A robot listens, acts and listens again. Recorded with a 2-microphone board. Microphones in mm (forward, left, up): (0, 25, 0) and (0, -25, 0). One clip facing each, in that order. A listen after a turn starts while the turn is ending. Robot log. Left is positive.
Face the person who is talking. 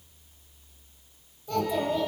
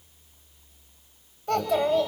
note: The child speaking: about 65° right or 115° right.
cmd yaw -65
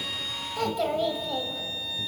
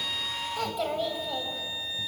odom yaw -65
end: Found it: a child speaking, straight ahead, 2 to 4 m away.